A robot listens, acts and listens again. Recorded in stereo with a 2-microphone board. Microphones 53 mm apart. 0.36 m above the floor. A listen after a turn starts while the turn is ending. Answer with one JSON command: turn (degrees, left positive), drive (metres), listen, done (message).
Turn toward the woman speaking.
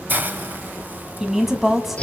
{"turn": 30}
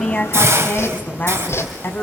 {"turn": 135}
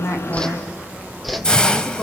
{"done": "Found it: a woman speaking, straight ahead."}